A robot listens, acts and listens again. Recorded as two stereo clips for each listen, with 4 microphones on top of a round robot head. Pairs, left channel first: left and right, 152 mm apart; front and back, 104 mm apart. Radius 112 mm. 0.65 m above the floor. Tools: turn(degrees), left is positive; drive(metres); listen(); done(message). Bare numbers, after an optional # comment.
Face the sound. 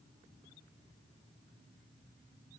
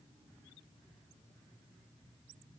listen()
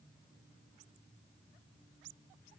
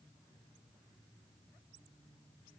listen()
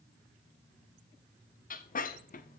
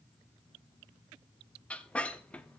# The squeak: 80° left.
turn(80)
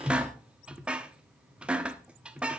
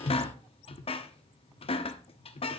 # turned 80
done("Facing the squeak.")